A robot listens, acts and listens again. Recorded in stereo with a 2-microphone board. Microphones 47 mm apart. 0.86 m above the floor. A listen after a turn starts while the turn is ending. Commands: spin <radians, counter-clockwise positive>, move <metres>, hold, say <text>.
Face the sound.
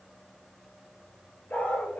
spin 0.70
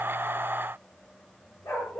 spin 1.83
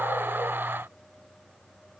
hold
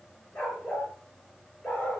spin 0.44
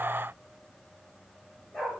spin 0.17
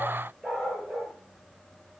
say Found it: a dog barking, straight ahead.